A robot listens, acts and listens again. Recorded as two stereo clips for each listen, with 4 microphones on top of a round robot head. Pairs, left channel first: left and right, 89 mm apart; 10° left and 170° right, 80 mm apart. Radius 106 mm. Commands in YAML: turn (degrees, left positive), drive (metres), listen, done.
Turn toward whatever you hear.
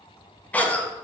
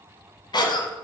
turn: 15
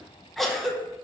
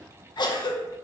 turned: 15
done: "Found it: a cough, straight ahead, under 1 m away."